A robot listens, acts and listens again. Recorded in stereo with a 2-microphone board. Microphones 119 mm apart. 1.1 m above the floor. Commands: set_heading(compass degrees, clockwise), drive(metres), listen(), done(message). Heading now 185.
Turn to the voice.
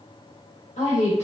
set_heading(115)
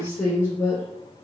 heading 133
set_heading(113)
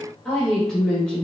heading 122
set_heading(112)
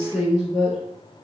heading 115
done("Facing the woman speaking.")